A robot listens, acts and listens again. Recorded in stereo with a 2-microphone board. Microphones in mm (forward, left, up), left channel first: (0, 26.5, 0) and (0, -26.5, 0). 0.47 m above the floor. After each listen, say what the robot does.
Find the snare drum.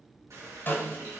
Turn 45° left.
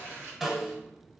Found it: a snare drum, straight ahead.